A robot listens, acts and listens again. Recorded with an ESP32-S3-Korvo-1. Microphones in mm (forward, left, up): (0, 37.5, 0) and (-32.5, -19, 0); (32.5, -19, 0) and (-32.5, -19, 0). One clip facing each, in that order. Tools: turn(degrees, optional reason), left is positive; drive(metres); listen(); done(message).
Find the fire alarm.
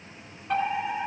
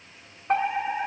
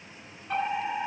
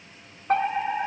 turn(degrees=-165, reason="The fire alarm: 165° right.")
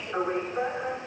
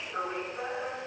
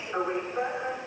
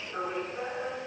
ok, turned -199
turn(degrees=35, reason="The fire alarm is now 35° left.")
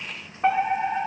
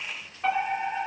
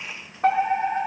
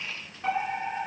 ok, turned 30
done("Facing the fire alarm, 2 to 4 m away.")